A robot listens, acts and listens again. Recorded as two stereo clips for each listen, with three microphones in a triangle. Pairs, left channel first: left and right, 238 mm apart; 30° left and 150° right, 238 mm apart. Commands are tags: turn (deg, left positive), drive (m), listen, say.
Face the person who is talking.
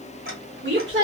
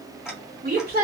<turn deg="-110"/>
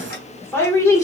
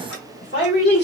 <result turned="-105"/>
<turn deg="20"/>
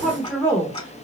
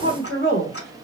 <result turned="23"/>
<turn deg="15"/>
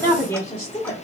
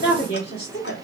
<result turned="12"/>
<turn deg="25"/>
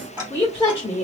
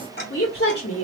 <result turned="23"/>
<turn deg="20"/>
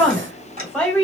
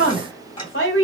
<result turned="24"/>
<say>Found it: a woman speaking, straight ahead, 1 to 2 m away.</say>